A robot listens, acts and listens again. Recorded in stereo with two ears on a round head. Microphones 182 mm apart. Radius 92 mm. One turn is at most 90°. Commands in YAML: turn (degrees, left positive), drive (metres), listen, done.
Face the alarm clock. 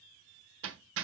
listen: true
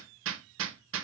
listen: true
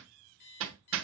turn: 55
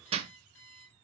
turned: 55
turn: 65
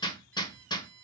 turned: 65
turn: 10
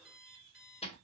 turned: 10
done: "Facing the alarm clock."